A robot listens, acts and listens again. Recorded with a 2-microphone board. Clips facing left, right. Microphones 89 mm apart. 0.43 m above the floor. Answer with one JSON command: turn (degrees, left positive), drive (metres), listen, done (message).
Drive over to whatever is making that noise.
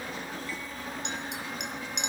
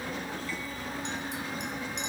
{"turn": 70}
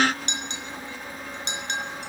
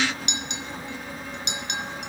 {"turn": 35}
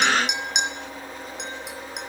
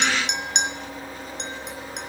{"drive": 1.0}
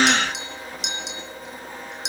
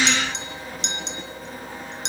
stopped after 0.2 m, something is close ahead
{"done": "Something is in my way. I am facing the clink but have not reached it."}